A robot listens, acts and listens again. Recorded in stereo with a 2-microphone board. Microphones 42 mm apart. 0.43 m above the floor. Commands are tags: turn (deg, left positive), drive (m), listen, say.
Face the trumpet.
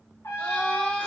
<turn deg="65"/>
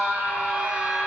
<listen/>
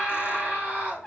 <say>Found it: a trumpet, straight ahead.</say>